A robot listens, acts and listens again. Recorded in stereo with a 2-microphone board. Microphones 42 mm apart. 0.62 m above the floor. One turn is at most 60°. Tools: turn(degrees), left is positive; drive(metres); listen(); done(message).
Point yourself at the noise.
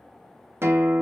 turn(degrees=-60)
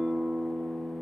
turn(degrees=-25)
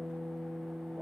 done("Facing the guitar, under 1 m away.")